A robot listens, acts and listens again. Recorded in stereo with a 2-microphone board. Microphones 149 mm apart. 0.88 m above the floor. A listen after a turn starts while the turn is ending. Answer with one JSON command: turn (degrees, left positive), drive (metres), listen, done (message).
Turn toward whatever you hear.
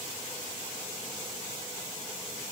{"listen": true}
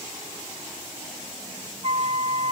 {"turn": -45}
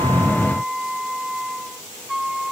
{"done": "Found it: a flute, straight ahead."}